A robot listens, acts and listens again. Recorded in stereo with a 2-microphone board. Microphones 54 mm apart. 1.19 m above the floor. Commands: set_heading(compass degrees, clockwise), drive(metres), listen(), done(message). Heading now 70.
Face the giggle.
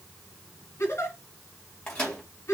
set_heading(10)
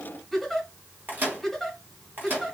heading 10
done("Facing the giggle, 2 to 4 m away.")